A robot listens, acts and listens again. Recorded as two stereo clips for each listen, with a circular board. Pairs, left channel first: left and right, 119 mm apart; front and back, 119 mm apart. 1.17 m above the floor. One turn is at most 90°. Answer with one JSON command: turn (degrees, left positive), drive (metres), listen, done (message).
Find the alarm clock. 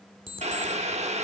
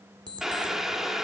{"turn": -90}
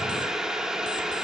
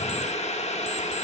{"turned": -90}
{"turn": -40}
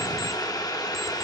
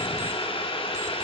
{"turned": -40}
{"listen": true}
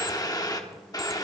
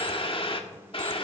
{"done": "I heard an alarm clock from this way, but can't make it out now."}